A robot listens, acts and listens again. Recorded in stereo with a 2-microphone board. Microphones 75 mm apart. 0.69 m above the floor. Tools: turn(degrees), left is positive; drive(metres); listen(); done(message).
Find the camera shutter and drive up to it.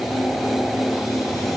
listen()
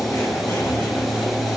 listen()
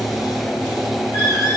done("I can't make out a camera shutter to turn to.")